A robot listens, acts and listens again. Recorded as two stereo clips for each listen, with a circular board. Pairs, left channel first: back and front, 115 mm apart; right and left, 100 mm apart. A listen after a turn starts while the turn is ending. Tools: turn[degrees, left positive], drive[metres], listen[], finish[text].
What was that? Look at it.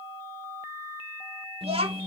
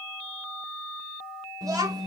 Thought: The child speaking: 40° left.
Action: turn[40]
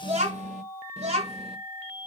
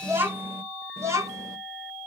Thought: The child speaking is now 30° left.
Action: turn[30]
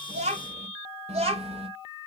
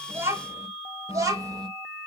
Thought: The child speaking is now 35° left.
Action: turn[35]
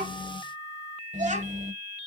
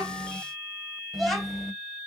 Action: finish[Facing the child speaking, 2 to 4 m away.]